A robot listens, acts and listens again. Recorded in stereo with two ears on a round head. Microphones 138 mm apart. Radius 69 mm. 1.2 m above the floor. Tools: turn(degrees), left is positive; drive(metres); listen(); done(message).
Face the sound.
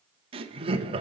turn(degrees=-35)
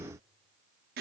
turn(degrees=-110)
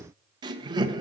turn(degrees=-25)
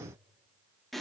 done("Found it: laughter, straight ahead, under 1 m away.")